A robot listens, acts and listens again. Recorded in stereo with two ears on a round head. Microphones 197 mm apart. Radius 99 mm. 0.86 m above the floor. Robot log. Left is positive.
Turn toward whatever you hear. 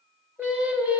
cmd yaw -30
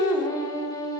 note: So it is at 20° left.
cmd yaw +20
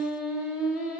end: Facing the singing, 2 to 4 m away.